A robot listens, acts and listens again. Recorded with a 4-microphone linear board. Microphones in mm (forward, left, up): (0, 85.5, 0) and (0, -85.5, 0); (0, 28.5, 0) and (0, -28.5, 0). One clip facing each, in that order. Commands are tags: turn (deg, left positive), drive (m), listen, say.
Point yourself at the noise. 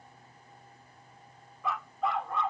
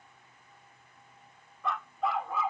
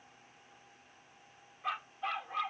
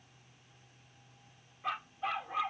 <turn deg="-30"/>
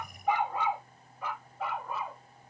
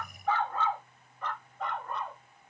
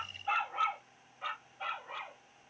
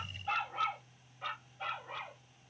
<turn deg="30"/>
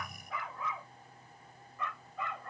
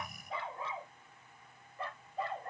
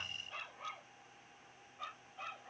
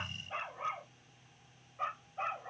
<turn deg="-35"/>
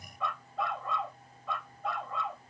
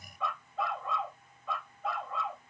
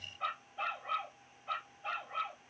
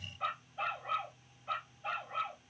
<say>Found it: a dog barking, straight ahead.</say>